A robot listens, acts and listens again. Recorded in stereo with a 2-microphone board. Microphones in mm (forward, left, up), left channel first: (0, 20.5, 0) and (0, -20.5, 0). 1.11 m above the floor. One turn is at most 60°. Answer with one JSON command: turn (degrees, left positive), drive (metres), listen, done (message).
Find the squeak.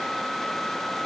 {"listen": true}
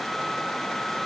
{"listen": true}
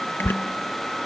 {"turn": 60}
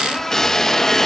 {"turn": 10}
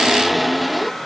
{"done": "Found it: a squeak, straight ahead."}